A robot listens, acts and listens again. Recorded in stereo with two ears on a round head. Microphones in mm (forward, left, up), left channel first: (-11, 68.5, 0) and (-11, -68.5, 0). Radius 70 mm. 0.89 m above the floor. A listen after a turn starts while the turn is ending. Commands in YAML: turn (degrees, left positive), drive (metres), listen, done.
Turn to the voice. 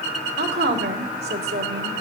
turn: -90
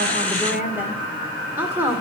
turn: -15
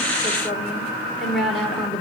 done: "Facing the woman speaking."